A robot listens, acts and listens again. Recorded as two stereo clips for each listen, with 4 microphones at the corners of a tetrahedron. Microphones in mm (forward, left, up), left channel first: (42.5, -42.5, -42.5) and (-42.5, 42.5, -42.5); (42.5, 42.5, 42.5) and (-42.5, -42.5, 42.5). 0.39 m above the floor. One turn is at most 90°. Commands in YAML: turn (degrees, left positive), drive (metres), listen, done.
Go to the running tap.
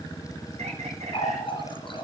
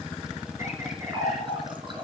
turn: -90
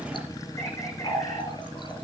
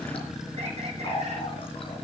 drive: 1.0
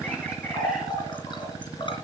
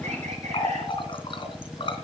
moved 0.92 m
drive: 1.0
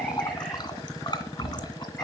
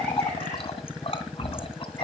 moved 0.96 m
drive: 1.0
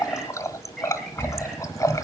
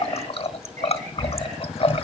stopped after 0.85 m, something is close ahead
turn: 15
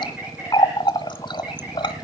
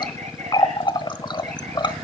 done: "Arrived at the running tap, straight ahead."